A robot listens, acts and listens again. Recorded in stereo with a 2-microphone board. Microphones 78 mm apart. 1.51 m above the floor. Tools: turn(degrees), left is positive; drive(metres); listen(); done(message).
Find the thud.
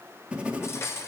listen()
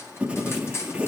listen()
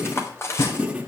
turn(degrees=70)
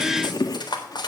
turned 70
listen()
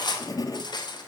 done("I heard a thud, but can't make it out now. It was about straight ahead or 40° left.")